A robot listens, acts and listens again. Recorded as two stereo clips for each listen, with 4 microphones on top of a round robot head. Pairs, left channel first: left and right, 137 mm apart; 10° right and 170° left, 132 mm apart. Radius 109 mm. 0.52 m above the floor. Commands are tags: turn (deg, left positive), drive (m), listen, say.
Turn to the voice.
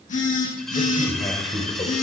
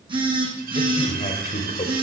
<turn deg="25"/>
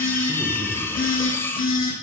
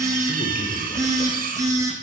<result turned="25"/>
<listen/>
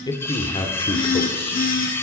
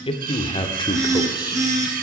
<turn deg="40"/>
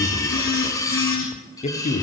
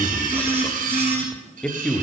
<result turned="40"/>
<turn deg="70"/>
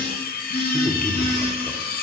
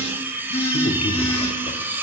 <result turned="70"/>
<turn deg="10"/>
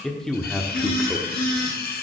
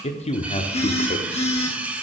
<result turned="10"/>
<say>Facing the man speaking, 1 to 2 m away.</say>